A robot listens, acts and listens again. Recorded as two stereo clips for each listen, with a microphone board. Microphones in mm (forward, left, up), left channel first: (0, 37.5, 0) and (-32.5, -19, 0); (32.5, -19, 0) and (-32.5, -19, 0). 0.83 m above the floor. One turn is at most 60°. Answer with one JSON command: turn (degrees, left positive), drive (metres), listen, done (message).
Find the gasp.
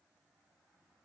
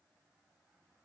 {"listen": true}
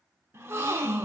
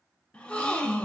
{"turn": -60}
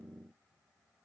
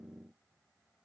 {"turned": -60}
{"turn": -10}
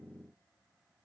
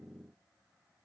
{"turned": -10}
{"done": "Facing where the gasp came from. I can't hear it now."}